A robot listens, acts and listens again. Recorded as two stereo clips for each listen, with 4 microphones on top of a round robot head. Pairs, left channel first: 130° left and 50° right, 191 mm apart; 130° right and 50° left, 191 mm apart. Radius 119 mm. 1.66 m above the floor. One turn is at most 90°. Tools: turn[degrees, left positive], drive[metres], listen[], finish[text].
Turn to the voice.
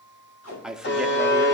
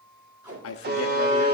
Thought: The man speaking: 140° right.
Action: turn[-90]
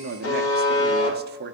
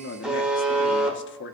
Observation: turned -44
Thought: The man speaking is now 95° right.
Action: turn[-90]
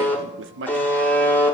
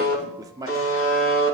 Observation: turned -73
Thought: The man speaking is now 20° right.
Action: turn[-20]
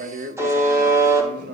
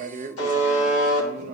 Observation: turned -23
Action: finish[Facing the man speaking, under 1 m away.]